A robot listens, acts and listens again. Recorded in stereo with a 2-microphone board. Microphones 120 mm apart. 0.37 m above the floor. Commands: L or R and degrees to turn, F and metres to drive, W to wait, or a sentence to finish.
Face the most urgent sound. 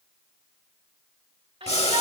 R55
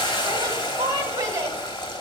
R40
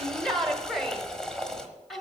Found it: a shout, straight ahead, 1 to 2 m away.